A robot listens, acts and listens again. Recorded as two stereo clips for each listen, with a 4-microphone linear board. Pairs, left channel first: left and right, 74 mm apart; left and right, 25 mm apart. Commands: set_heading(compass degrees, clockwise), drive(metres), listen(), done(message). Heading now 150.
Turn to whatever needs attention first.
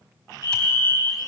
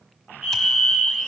set_heading(180)
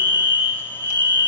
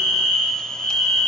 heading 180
set_heading(300)
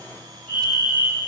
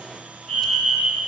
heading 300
set_heading(285)
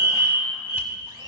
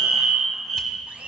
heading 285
done("Facing the fire alarm, over 4 m away.")